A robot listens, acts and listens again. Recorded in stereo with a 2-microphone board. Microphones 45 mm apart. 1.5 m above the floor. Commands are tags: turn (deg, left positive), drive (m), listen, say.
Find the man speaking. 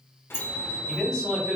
<turn deg="30"/>
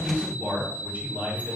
<turn deg="-45"/>
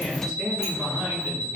<turn deg="-15"/>
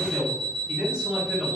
<turn deg="-15"/>
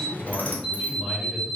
<say>Facing the man speaking.</say>